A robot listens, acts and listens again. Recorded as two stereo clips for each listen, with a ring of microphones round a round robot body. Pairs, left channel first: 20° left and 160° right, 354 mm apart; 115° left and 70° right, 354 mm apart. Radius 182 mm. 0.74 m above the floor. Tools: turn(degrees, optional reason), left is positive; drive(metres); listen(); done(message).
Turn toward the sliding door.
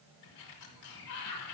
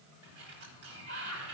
turn(degrees=-15, reason="The sliding door: 15° right.")
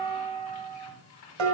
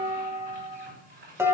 done("Found it: a sliding door, straight ahead.")